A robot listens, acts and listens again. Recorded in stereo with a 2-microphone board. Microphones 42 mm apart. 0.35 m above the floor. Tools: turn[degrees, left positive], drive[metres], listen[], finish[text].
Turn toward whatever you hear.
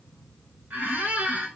Thought: The squeak: about 45° right or 135° right.
Action: turn[-45]
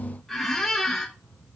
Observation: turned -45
Action: finish[Facing the squeak.]